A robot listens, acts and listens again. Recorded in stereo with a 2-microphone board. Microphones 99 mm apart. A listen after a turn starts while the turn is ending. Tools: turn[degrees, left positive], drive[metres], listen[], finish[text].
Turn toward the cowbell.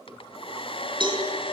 Thought: The cowbell: about 55° right or 125° right.
Action: turn[-55]
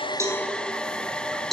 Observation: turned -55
Action: finish[Facing the cowbell.]